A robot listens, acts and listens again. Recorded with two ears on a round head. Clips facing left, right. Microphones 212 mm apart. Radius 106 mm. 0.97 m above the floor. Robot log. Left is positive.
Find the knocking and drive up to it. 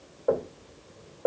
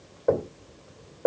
note: The knocking: about 20° right or 160° right.
cmd yaw -20
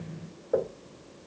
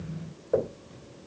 cmd fwd 1.0
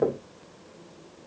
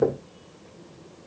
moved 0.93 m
cmd fwd 1.0
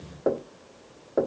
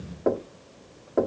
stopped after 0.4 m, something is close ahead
end: Arrived at the knocking, straight ahead.